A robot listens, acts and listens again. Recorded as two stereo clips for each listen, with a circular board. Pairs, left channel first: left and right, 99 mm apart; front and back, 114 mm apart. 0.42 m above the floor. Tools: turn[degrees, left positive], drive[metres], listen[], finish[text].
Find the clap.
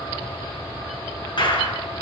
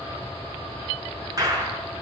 Thought: The clap: 125° left.
Action: turn[125]
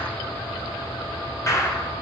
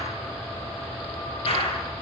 Thought: The clap is now 35° left.
Action: turn[35]
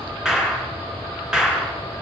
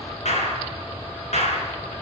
Action: finish[Found it: a clap, straight ahead, over 4 m away.]